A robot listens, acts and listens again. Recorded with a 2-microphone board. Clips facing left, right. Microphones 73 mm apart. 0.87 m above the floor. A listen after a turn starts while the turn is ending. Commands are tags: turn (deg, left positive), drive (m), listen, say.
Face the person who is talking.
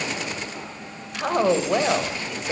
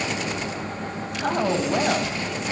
<turn deg="90"/>
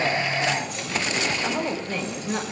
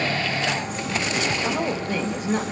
<turn deg="-10"/>
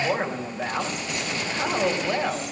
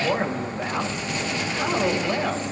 <say>Facing the woman speaking, over 4 m away.</say>